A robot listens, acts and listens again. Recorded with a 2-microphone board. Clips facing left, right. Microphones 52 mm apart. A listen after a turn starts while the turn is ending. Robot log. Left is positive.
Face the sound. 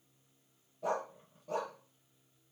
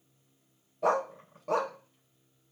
cmd yaw -90
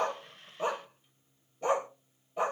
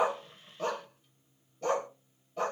note: So it is at 15° left.
cmd yaw +15
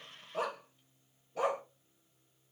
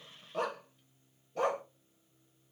end: Facing the dog barking.